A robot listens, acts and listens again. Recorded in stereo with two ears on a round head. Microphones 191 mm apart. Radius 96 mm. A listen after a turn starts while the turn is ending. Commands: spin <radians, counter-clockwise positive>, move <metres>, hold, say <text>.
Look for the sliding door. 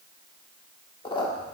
hold
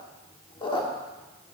hold
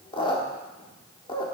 say I can't make out a sliding door, only a squeak.